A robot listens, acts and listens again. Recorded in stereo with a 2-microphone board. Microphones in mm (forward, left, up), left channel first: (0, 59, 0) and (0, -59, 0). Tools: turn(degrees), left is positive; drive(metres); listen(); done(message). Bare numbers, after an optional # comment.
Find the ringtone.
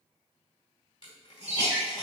turn(-30)
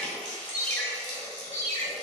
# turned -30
# So it is at 20° left.
turn(20)
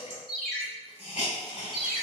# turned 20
done("Found it: a ringtone, straight ahead.")